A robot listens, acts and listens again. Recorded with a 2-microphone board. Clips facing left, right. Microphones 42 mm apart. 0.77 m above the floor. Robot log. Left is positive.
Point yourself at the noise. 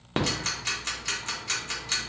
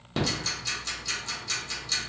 note: The ticking: about 50° left or 130° left.
cmd yaw +50
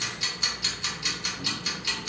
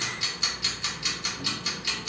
end: Facing the ticking.